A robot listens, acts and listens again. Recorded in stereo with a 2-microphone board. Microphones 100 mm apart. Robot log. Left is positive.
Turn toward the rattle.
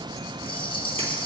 note: The rattle: about 60° left or 120° left.
cmd yaw +60
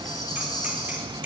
cmd idle
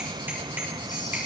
cmd idle
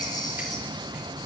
end: I heard a rattle, but can't make it out now. It was about straight ahead or 60° left.